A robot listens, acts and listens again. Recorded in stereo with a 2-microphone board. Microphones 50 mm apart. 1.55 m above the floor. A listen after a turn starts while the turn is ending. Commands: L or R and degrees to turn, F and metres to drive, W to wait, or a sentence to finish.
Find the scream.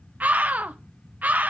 R30
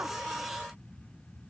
W
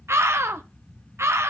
R120
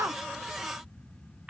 R25
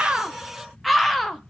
Facing the scream, 1 to 2 m away.